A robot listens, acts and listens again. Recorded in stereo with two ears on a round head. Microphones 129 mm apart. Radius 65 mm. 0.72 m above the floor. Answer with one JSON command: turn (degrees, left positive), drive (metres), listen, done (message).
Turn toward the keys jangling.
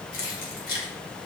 {"turn": 65}
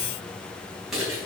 {"done": "Facing the keys jangling, 2 to 4 m away."}